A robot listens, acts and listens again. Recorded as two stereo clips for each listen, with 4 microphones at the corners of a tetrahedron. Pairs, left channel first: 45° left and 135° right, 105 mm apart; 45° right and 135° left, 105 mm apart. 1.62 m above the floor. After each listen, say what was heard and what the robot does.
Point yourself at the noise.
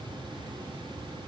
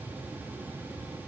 Keep listening.
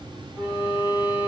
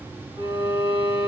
The violin: 115° left. Turn 115° left.
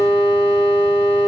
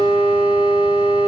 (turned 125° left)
The violin is now 10° right. Turn 10° right.
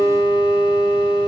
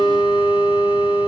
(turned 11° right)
Found it: a violin, straight ahead, 2 to 4 m away.